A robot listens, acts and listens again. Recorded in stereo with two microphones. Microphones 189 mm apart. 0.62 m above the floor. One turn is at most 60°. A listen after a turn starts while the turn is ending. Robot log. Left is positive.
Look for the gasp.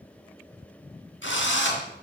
cmd idle
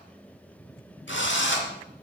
cmd idle
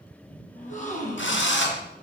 note: The gasp: about 40° left or 140° left.
cmd yaw +40
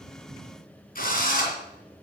cmd idle
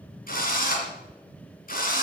end: I heard a gasp, but can't make it out now. It was about straight ahead or 100° left.